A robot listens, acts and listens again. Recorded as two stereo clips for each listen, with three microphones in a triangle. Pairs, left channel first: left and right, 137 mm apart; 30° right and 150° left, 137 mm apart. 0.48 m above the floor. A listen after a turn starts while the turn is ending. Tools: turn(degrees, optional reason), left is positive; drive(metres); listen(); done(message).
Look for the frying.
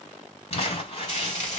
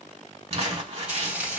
turn(degrees=70, reason="The frying: 70° left.")
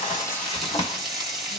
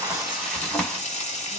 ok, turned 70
done("Found it: frying, straight ahead.")